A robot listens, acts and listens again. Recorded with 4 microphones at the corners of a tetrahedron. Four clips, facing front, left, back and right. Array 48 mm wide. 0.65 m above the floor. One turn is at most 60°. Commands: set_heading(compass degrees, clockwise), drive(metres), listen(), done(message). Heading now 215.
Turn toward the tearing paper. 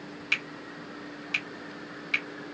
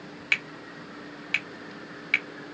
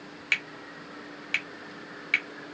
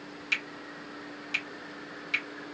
listen()
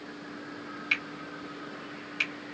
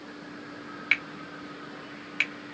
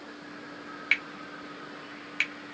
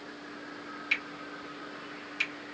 listen()
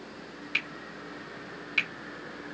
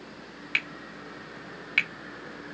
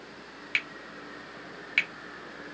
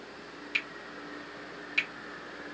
done("I can't make out tearing paper to turn to.")